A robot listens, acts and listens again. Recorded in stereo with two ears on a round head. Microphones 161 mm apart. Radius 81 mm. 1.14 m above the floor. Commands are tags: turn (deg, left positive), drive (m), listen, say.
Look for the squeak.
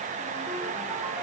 <listen/>
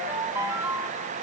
<listen/>
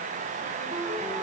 <say>I can't make out a squeak, only a ringtone.</say>